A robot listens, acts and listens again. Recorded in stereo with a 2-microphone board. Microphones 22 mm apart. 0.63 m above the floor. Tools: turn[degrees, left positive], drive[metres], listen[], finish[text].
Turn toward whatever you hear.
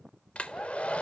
Action: turn[90]
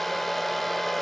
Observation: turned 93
Thought: So it is at 10° left.
Action: turn[10]
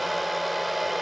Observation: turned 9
Action: finish[Found it: a hair dryer, straight ahead, 1 to 2 m away.]